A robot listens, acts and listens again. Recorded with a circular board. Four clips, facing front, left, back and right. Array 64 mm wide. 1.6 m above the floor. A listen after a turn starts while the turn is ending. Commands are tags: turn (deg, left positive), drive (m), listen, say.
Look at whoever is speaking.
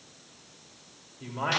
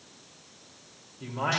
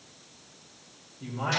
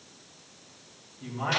<turn deg="45"/>
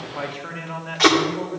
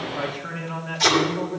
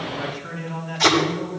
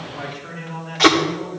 <turn deg="20"/>
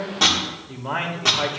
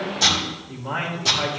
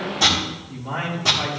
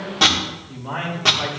<say>Facing the man speaking.</say>